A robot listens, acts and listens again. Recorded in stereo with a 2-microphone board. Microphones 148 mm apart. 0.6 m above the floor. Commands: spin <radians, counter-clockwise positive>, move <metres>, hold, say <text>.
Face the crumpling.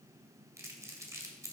spin -0.35
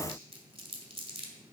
spin -2.44
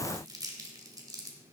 spin -0.44
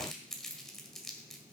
say Facing the crumpling.